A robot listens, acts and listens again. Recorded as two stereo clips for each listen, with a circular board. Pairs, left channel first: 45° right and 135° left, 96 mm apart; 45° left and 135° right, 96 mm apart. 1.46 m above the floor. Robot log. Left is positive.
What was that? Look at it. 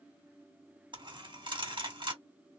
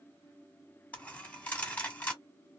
note: The dropped coin: 120° left.
cmd yaw +120
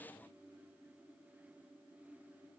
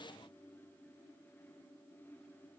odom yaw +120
end: I heard a dropped coin from this way, but can't make it out now.